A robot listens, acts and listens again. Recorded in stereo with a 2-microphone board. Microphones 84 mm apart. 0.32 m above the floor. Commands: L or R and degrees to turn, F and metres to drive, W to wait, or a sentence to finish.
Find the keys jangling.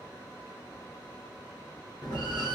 W
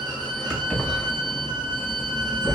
L30
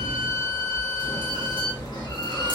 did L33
W
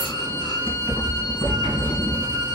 L105
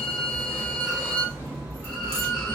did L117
R15
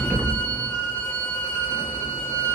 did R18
R10
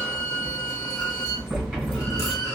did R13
W
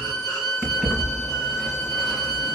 Facing the keys jangling.